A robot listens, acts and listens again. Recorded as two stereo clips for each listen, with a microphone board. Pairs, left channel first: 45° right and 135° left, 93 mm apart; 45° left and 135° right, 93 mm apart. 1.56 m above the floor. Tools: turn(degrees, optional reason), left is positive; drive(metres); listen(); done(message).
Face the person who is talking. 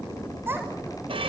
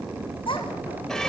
turn(degrees=70, reason="The child speaking: 70° left.")
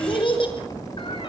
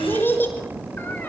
turn(degrees=-25, reason="The child speaking is now 25° right.")
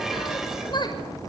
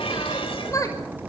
turn(degrees=-10, reason="The child speaking is now 10° right.")
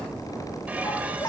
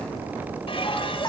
done("Found it: a child speaking, straight ahead, over 4 m away.")